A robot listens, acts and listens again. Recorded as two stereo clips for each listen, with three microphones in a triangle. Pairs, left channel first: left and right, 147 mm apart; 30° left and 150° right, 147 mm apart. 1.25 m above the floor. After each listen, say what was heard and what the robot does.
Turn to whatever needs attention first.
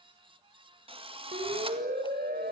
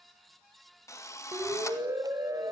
The siren: 80° right. Turn 80° right.
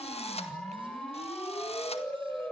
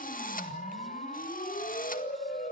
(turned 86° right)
Found it: a siren, straight ahead, over 4 m away.